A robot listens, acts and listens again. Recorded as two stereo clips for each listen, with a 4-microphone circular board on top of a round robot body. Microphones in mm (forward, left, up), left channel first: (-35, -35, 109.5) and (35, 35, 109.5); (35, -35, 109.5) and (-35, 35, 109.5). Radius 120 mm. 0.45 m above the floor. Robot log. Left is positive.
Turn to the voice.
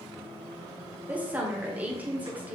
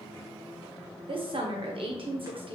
note: The woman speaking: 120° left.
cmd yaw +120
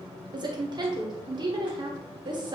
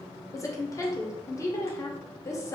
note: The woman speaking is now 10° left.
cmd yaw +10
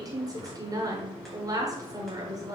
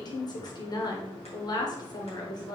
end: Found it: a woman speaking, straight ahead, 1 to 2 m away.